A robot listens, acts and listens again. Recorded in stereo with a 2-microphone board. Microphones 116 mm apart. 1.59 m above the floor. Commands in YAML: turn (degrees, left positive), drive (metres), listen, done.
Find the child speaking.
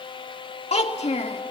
turn: 65
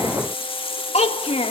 turn: 70
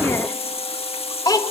turn: 35
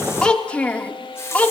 turn: 10
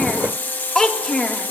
done: "Facing the child speaking, 1 to 2 m away."